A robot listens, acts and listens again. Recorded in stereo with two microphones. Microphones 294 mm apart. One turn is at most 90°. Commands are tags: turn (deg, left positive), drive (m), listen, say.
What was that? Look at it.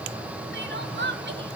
<turn deg="-40"/>
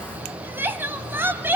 <turn deg="-10"/>
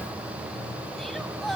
<say>Found it: crying, straight ahead, 1 to 2 m away.</say>